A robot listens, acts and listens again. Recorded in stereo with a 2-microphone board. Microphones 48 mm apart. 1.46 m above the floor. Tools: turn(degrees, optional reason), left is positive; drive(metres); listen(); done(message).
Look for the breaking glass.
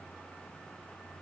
listen()
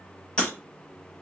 turn(degrees=20, reason="The breaking glass: about 20° left or 160° left.")
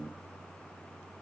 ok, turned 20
listen()
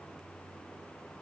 done("I heard breaking glass, but can't make it out now. It was about straight ahead or 140° left.")